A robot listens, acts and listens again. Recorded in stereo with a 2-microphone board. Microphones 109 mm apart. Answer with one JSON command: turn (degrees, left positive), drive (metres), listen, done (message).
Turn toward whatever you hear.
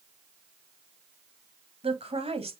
{"turn": -65}
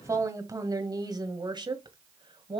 {"turn": -50}
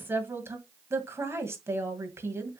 {"turn": -25}
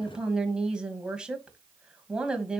{"turn": -10}
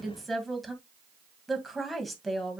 {"done": "Facing the woman speaking, 2 to 4 m away."}